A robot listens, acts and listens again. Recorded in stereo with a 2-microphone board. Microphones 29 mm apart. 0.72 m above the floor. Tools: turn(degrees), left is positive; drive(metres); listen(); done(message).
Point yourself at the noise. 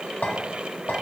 turn(degrees=90)
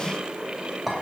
done("Found it: a clink, straight ahead.")